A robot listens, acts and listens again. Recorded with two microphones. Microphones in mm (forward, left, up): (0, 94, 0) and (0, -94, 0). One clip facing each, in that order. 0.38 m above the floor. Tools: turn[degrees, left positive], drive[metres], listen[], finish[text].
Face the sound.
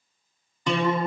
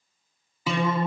Action: turn[-30]
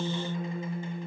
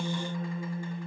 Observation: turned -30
Thought: So it is at 25° left.
Action: turn[25]
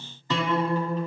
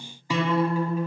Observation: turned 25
Thought: The guitar is now 10° right.
Action: turn[-10]
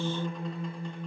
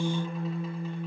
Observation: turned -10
Action: finish[Facing the guitar, 1 to 2 m away.]